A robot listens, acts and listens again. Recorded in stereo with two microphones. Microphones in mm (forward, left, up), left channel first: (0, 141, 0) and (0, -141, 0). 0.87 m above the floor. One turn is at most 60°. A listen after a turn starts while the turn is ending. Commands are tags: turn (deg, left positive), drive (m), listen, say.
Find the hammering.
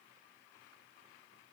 <listen/>
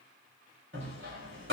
<turn deg="-45"/>
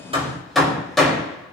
<say>Found it: hammering, straight ahead, over 4 m away.</say>